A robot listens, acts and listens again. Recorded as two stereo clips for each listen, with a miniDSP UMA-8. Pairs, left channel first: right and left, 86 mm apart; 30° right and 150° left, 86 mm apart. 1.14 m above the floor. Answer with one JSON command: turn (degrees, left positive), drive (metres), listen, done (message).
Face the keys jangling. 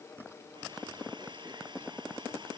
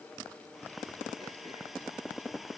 {"listen": true}
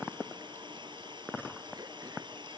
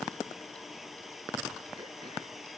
{"listen": true}
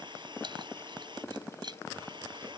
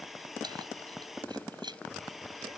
{"turn": 120}
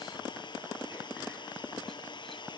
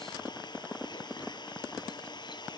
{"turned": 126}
{"listen": true}
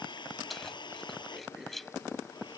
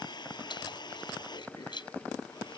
{"done": "Facing the keys jangling."}